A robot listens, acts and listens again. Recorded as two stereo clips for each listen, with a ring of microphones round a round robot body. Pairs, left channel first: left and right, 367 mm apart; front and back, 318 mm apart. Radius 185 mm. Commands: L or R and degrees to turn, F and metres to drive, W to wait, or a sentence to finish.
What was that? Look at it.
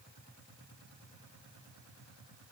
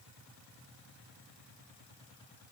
W
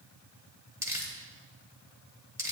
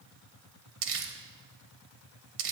R175
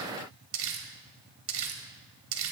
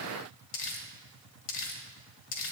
R35
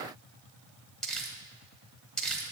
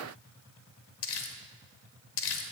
Facing the crumpling, 1 to 2 m away.